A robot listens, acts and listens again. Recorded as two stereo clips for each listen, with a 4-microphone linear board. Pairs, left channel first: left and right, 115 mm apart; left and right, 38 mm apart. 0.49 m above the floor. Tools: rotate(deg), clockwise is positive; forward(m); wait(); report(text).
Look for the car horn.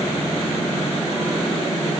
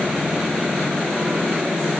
wait()
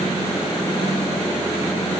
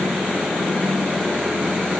wait()
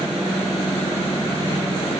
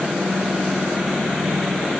report("I can't make out a car horn.")